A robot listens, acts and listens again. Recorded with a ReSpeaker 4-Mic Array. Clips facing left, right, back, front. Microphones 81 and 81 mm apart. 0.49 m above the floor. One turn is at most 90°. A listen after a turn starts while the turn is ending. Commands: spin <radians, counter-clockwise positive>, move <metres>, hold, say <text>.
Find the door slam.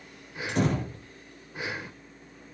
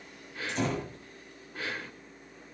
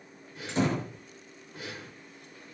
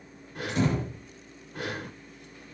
spin 1.57
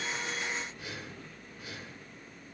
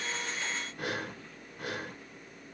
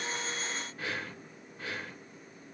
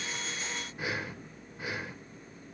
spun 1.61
spin 0.44
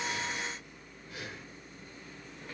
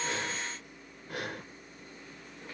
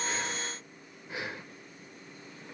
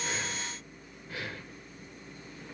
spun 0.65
spin -0.26
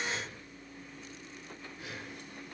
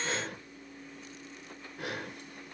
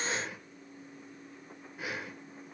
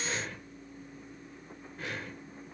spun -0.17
say Facing where the door slam came from. I can't hear it now.